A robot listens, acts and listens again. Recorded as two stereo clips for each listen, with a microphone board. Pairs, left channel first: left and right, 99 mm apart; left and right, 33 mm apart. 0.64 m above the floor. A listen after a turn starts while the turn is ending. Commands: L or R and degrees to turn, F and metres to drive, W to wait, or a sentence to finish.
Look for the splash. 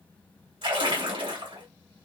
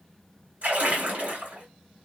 R55
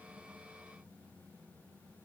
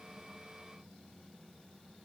W
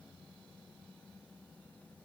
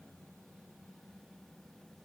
I heard a splash, but can't make it out now. It was about straight ahead or 70° right.